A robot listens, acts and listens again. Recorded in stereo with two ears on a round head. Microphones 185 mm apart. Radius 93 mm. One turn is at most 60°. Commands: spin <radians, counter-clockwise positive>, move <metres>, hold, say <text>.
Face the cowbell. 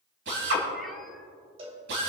spin -0.52
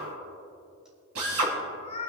hold
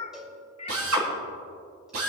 say Facing the cowbell, 2 to 4 m away.